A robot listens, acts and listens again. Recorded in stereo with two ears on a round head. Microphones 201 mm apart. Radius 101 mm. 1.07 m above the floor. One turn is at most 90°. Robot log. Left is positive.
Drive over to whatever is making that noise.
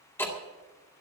cmd yaw +30
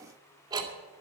note: So it is at 20° right.
cmd yaw -20
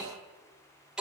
cmd fwd 1.0
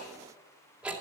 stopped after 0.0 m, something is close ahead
end: Blocked. The ticking is further on, straight ahead.